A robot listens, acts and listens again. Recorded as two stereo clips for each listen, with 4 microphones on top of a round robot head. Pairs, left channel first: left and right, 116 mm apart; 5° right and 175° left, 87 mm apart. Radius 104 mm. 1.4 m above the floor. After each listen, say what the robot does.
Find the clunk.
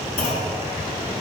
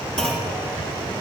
Turn 75° left.
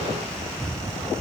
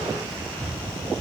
Facing where the clunk came from. I can't hear it now.